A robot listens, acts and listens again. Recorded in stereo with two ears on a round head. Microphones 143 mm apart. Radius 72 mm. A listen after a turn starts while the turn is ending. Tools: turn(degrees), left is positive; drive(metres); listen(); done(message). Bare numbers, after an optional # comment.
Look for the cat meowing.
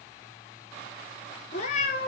# The cat meowing: about 45° left or 135° left.
turn(45)
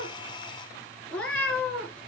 # So it is at 10° left.
turn(10)
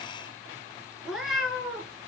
done("Found it: a cat meowing, straight ahead.")